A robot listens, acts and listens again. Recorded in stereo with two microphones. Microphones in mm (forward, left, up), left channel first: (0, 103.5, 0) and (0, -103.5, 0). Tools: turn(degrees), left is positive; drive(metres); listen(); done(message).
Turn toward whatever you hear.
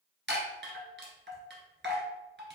turn(degrees=-60)
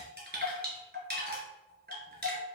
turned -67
turn(degrees=-55)
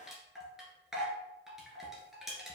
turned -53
done("Found it: a chime, straight ahead.")